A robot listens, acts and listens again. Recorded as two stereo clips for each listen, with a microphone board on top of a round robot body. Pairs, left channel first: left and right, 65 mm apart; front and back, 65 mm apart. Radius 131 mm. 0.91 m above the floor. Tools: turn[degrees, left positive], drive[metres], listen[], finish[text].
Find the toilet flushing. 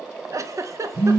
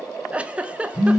Action: listen[]
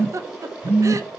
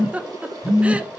Action: listen[]
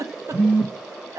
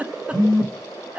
Action: finish[I can't make out a toilet flushing, only a phone buzzing and a giggle.]